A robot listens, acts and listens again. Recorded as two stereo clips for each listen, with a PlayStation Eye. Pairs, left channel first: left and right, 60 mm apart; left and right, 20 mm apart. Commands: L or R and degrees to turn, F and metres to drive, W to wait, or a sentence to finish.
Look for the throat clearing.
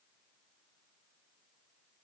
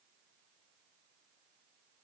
W
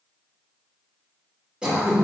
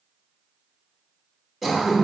R15
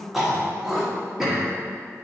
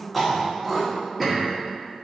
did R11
Found it: throat clearing, straight ahead.